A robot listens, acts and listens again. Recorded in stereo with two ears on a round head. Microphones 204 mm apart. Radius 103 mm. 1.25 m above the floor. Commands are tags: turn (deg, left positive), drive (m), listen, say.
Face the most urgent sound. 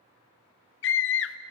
<turn deg="55"/>
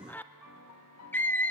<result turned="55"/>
<turn deg="10"/>
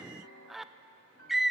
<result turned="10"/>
<say>Found it: a scream, straight ahead, under 1 m away.</say>